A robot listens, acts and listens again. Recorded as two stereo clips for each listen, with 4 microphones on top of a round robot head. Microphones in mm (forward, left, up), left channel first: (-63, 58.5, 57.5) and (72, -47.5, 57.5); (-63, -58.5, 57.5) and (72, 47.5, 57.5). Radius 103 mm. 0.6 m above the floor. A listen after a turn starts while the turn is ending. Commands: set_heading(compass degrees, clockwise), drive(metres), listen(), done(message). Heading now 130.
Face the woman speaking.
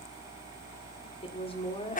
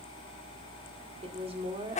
set_heading(40)
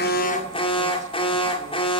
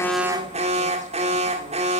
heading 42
listen()
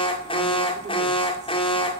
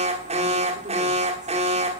listen()
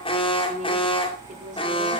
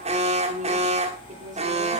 done("Facing the woman speaking.")